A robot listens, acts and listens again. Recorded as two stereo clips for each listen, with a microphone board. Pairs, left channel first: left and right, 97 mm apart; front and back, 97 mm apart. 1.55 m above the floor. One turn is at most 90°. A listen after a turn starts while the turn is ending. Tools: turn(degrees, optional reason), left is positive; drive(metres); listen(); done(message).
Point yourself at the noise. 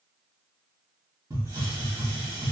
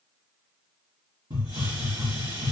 turn(degrees=-90, reason="The hiss: 145° right.")
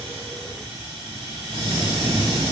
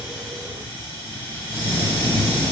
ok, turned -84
turn(degrees=-60, reason="The hiss is now 60° right.")
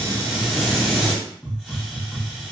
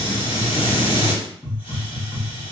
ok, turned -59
done("Found it: a hiss, straight ahead, 1 to 2 m away.")